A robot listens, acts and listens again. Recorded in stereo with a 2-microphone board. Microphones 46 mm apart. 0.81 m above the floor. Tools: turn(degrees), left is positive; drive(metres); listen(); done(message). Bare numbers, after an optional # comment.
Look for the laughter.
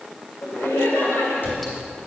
# The laughter: about 70° left or 110° left.
turn(70)
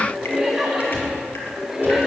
# So it is at 10° right.
turn(-10)
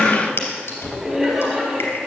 done("Facing the laughter, over 4 m away.")